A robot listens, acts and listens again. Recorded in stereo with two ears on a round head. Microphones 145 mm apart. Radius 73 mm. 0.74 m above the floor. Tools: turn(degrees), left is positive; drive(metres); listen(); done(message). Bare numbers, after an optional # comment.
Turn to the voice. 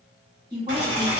# The woman speaking: about 30° right or 150° right.
turn(-30)
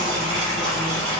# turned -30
listen()
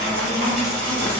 listen()
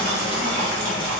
done("I heard a woman speaking, but can't make it out now. It was about straight ahead or 120° right.")